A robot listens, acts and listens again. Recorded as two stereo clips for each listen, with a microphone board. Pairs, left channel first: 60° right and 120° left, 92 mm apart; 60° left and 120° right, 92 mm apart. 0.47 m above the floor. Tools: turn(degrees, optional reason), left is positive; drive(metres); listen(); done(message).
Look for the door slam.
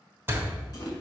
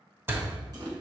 turn(degrees=180, reason="The door slam: straight behind.")
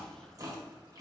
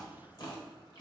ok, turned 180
done("I heard a door slam from this way, but can't make it out now.")